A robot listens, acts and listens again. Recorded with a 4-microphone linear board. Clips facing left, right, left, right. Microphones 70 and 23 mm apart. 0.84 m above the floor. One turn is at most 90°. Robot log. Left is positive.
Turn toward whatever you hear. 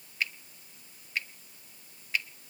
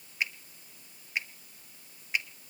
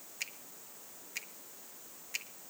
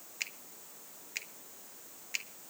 note: The finger snap: about 20° right or 160° right.
cmd yaw -20
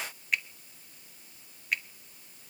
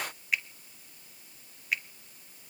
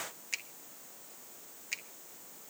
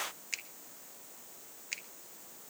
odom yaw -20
end: Found it: a finger snap, straight ahead, 1 to 2 m away.